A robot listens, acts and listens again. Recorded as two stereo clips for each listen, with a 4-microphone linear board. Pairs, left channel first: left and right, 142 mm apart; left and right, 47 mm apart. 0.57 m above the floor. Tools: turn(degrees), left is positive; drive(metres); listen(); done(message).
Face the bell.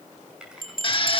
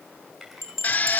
turn(degrees=90)
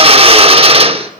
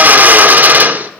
listen()
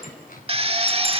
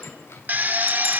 listen()
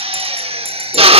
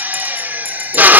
done("I heard a bell from this way, but can't make it out now.")